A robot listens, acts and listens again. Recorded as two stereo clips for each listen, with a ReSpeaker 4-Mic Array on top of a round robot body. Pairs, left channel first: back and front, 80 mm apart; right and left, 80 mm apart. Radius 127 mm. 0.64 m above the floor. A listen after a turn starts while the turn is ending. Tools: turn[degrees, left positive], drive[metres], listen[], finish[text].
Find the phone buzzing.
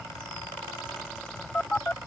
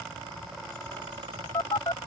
Thought: The phone buzzing: 110° right.
Action: turn[-110]
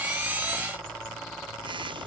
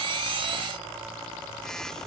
Action: finish[Facing the phone buzzing.]